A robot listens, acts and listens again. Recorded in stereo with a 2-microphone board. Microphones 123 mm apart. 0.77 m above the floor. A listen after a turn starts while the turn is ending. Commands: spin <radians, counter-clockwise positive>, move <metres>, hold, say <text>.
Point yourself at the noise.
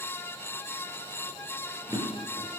spin -0.44
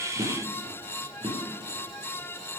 spin -2.36
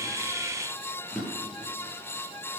say Found it: a drawer, straight ahead, over 4 m away.